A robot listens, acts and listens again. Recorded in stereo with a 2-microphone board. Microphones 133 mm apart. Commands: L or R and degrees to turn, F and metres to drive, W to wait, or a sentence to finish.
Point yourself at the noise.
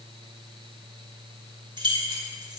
R35
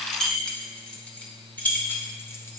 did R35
L15
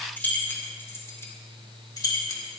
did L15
L30
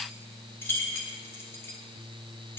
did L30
L15
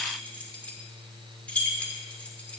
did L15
L10
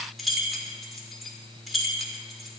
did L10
Found it: keys jangling, straight ahead, 1 to 2 m away.